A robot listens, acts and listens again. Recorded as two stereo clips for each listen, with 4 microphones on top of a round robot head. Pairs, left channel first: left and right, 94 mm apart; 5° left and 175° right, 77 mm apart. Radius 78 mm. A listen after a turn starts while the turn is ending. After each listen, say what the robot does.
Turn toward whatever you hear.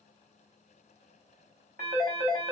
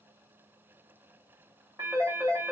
Turn 105° right.
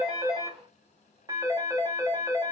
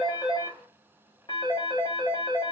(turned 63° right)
Turn 40° right.
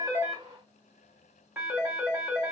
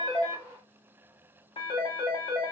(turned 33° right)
Turn 10° right.
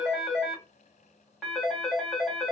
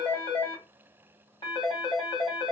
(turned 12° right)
Found it: a phone ringing, straight ahead, 1 to 2 m away.